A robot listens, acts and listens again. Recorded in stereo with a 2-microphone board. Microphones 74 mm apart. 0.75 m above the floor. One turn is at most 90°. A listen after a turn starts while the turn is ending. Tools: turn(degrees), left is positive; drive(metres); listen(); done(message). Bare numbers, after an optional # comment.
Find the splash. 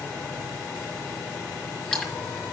turn(30)
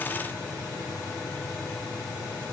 listen()
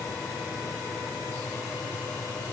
done("I heard a splash, but can't make it out now. It was about 20° right or 140° left.")